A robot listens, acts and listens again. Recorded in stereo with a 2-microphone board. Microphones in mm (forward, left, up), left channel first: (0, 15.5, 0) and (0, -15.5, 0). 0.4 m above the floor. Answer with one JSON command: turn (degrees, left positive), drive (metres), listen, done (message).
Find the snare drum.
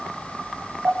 {"listen": true}
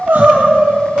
{"listen": true}
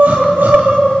{"done": "I can't make out a snare drum to turn to."}